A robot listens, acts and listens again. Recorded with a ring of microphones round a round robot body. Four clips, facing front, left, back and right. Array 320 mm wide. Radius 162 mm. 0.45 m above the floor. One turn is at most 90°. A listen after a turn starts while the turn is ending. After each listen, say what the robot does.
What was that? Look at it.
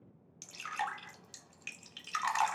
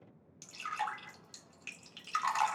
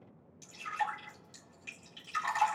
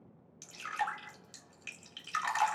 Turn 30° right.
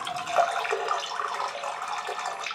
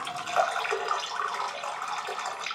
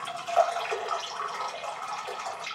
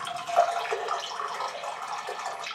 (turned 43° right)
Turn 10° left.
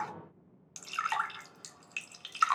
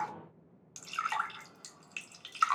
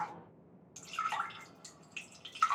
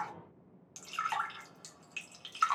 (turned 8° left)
Found it: dripping, straight ahead, 1 to 2 m away.